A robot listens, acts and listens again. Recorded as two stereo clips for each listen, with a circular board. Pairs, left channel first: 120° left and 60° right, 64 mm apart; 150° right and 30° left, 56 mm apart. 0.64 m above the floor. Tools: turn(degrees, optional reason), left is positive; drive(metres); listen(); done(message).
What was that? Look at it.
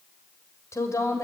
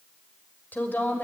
turn(degrees=155, reason="The woman speaking: 155° left.")
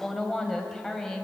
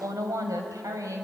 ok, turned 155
turn(degrees=35, reason="The woman speaking is now 35° left.")
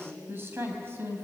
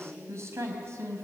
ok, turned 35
done("Facing the woman speaking, over 4 m away.")